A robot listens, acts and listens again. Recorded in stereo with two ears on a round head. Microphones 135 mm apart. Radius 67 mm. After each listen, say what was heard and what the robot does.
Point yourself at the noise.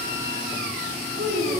The child speaking: about 65° right or 115° right. Turn 65° right.
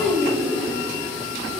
Facing the child speaking.